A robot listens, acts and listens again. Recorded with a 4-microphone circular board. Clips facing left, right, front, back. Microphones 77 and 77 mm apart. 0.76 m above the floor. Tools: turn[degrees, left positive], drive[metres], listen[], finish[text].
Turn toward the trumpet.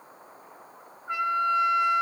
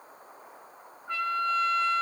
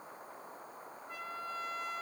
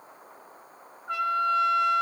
Thought: The trumpet: 165° left.
Action: turn[165]
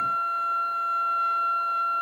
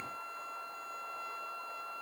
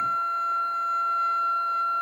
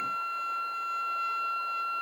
Thought: The trumpet is now 60° left.
Action: turn[60]
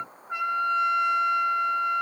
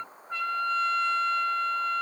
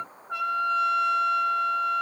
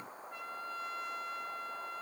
Thought: The trumpet is now 15° left.
Action: turn[15]
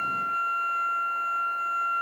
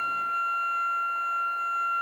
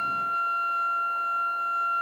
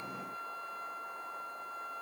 Action: finish[Found it: a trumpet, straight ahead.]